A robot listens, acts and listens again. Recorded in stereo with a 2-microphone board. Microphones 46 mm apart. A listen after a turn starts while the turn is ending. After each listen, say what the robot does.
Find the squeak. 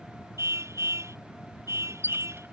Turn 45° right.
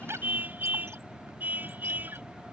Keep listening.
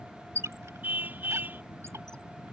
Turn 85° right.
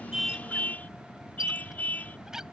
Turn 10° right.
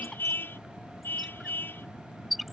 Facing the squeak.